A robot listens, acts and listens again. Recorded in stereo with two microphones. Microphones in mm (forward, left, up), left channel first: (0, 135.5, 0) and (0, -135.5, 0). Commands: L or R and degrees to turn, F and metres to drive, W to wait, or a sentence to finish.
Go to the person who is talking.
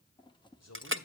L70
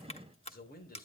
L35
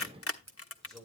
F1.0
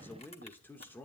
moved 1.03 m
L10
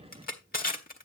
W
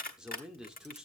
F1.0
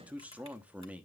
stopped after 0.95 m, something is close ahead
I am next to the man speaking.